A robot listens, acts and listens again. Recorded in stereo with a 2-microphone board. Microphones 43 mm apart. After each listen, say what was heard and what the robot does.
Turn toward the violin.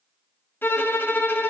The violin: about 55° left or 125° left. Turn 55° left.
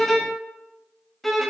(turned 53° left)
Facing the violin, 1 to 2 m away.